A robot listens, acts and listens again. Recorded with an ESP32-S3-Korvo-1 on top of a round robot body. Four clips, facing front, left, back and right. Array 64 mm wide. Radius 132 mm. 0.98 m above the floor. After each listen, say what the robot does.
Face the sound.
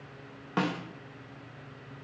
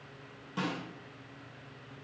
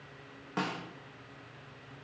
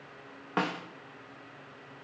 Turn 65° right.
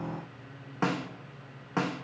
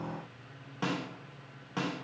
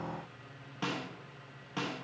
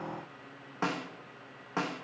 Turn 30° right.
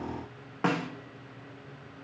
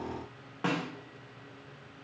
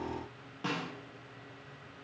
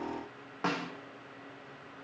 Turn 10° right.
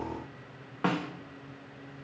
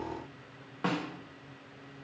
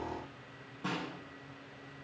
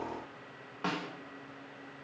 Found it: a snare drum, straight ahead.